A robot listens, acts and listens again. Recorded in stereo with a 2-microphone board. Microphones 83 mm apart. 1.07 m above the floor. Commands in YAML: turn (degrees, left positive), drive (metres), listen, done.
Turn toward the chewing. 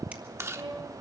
turn: -35
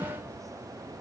listen: true
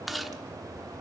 done: "Found it: chewing, straight ahead, under 1 m away."